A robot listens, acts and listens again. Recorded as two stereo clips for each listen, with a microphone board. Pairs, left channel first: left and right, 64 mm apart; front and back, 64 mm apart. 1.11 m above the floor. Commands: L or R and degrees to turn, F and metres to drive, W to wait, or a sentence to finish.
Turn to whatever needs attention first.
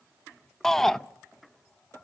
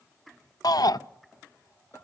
Facing the shout, under 1 m away.